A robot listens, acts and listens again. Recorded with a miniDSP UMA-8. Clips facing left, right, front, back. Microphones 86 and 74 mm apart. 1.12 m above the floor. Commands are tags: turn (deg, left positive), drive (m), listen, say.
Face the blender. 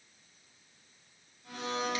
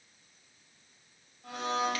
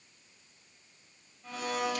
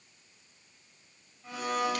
<turn deg="-100"/>
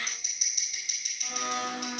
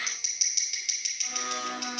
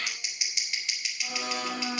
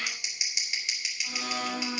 <say>Facing the blender.</say>